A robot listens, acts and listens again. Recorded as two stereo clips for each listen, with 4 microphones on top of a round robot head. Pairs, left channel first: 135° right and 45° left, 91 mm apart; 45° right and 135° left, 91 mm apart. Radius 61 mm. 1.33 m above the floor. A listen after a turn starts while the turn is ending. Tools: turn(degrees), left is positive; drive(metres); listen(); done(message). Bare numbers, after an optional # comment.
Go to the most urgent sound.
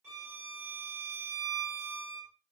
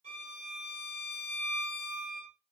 listen()
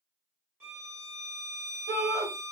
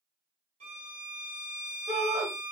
# The shout: 80° left.
turn(80)
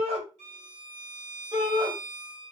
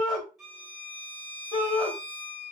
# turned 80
drive(1.0)
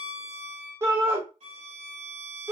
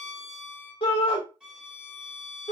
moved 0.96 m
# The shout is now 15° right.
turn(-15)
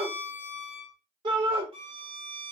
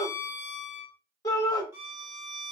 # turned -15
drive(1.0)
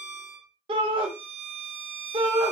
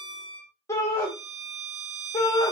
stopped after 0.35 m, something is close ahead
# The shout is now 15° left.
turn(15)
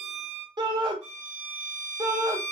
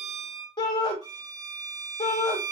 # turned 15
done("I am next to the shout.")